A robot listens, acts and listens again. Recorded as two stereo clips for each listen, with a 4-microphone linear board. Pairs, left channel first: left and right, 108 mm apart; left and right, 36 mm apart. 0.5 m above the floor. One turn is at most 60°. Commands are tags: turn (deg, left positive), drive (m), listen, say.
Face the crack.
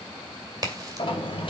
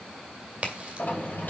<turn deg="-40"/>
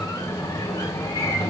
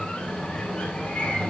<listen/>
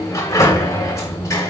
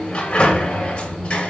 <say>I heard a crack, but can't make it out now. It was about straight ahead or 100° right.</say>